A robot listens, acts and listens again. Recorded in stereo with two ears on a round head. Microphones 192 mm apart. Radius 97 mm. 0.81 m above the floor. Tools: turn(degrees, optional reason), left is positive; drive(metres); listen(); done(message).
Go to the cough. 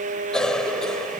turn(degrees=30)
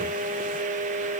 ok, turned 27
listen()
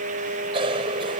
turn(degrees=-25, reason="So it is at 25° right.")
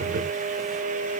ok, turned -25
listen()
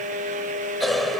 drive(metres=1.0)
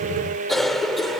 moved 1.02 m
drive(metres=1.0)
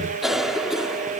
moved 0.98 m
drive(metres=1.0)
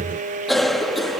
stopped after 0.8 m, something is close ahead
done("I am next to the cough.")